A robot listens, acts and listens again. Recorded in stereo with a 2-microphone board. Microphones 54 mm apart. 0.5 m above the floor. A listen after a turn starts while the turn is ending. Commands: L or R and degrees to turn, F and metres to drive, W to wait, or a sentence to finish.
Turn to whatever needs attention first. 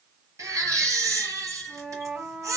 R90
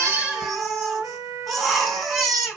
Found it: a baby crying, straight ahead.